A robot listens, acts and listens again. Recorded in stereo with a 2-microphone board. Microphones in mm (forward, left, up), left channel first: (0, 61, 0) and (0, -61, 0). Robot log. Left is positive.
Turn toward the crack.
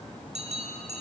cmd idle
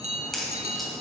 cmd yaw +30
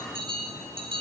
cmd idle
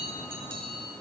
end: I heard a crack, but can't make it out now. It was about 30° right or 150° left.